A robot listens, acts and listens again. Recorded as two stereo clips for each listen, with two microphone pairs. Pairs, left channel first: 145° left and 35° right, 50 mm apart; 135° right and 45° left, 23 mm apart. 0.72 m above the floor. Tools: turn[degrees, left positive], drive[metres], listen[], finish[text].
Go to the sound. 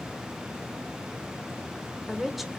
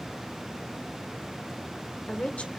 Thought: The woman speaking: 125° right.
Action: turn[-125]
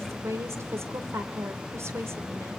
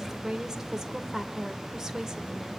Thought: The woman speaking is now 25° right.
Action: turn[-25]
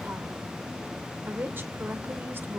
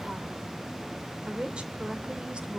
Action: drive[1.0]
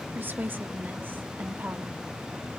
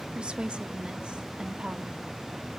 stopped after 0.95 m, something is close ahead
Action: finish[I am next to the woman speaking.]